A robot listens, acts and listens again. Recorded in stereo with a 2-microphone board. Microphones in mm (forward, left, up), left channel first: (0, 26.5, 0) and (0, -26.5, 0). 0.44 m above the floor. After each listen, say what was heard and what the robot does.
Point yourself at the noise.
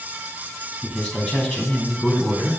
The man speaking: about 20° left or 160° left. Turn 20° left.
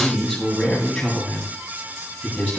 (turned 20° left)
The man speaking: about 20° left or 160° left. Turn 20° left.
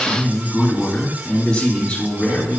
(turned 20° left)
Turn 30° left.
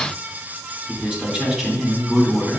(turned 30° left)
So it is at 10° right. Turn 10° right.
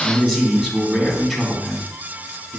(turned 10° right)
Facing the man speaking.